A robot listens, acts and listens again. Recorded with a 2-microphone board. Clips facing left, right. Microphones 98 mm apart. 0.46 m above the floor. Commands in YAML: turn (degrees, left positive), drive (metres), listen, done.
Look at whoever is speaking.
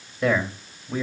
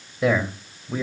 turn: -30
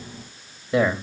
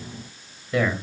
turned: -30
turn: 25
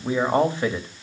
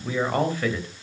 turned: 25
turn: 25
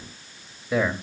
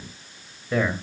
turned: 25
turn: 10
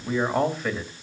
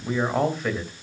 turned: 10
done: "Facing the man speaking."